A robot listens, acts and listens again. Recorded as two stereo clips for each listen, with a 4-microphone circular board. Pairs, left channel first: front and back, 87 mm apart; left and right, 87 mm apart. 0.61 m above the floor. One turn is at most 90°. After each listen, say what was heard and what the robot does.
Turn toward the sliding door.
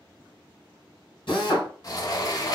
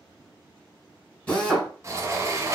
The sliding door: 40° right. Turn 40° right.
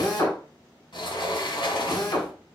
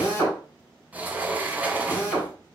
The sliding door is now 20° right. Turn 20° right.
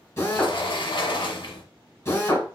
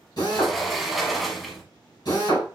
Found it: a sliding door, straight ahead, under 1 m away.